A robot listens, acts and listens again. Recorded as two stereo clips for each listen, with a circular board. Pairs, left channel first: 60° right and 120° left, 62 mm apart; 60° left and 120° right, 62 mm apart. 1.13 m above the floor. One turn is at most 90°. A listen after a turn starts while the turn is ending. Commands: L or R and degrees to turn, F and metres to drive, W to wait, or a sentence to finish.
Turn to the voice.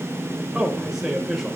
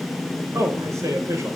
R90
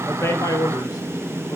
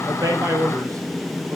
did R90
R85
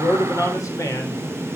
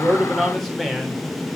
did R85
R25
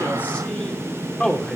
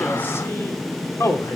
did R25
L15
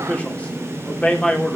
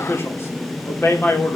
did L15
L10
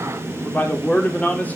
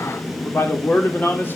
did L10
Facing the man speaking, 2 to 4 m away.